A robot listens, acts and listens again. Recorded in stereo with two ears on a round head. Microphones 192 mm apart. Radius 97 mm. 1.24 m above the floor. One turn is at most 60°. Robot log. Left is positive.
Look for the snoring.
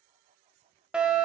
cmd idle
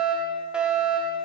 cmd idle
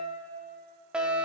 end: I can't make out snoring, only a fire alarm.